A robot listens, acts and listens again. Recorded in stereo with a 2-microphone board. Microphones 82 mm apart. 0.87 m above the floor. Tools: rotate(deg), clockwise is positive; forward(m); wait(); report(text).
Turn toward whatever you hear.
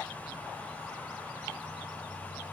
wait()
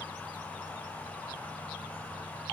wait()
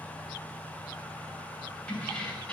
rotate(-30)
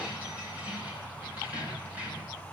rotate(20)
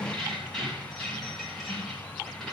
report("Facing the keys jangling.")